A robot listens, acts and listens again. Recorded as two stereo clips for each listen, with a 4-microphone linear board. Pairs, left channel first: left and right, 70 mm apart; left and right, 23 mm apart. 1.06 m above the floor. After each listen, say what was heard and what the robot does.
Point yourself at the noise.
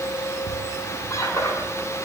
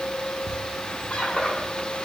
The squeak: about 45° left or 135° left. Turn 45° left.
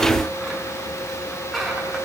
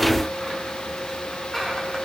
Found it: a squeak, straight ahead, over 4 m away.